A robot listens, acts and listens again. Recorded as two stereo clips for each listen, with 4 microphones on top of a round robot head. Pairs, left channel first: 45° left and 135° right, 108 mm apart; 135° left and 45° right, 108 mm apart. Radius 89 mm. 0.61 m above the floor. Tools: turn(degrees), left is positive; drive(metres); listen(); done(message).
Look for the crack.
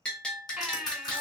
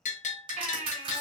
turn(degrees=-10)
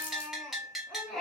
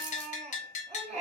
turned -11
done("I heard a crack from this way, but can't make it out now.")